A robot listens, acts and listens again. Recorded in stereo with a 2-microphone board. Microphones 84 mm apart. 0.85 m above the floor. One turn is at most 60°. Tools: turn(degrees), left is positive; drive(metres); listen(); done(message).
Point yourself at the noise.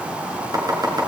turn(degrees=-45)
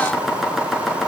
done("Found it: chopping, straight ahead, over 4 m away.")